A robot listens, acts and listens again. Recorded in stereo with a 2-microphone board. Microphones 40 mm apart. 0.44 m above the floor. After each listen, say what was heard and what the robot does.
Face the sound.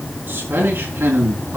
The man speaking: about 75° right or 105° right. Turn 75° right.
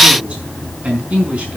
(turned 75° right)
So it is at 30° right. Turn 30° right.
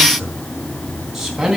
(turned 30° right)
The man speaking is now 10° right. Turn 10° right.
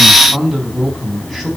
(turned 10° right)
Found it: a man speaking, straight ahead, 2 to 4 m away.